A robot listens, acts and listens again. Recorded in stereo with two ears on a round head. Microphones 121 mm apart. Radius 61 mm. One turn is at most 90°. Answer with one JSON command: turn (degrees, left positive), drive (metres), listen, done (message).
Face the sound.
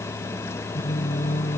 {"turn": 55}
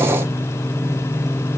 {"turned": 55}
{"done": "Found it: singing, straight ahead."}